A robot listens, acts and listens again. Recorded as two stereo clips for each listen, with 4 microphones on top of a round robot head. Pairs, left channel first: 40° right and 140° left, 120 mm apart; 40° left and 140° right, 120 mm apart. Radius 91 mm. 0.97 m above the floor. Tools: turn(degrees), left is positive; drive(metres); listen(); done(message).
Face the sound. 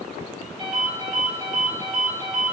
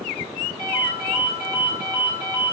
turn(degrees=95)
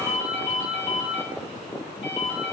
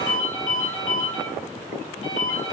done("Found it: a ringtone, straight ahead, 2 to 4 m away.")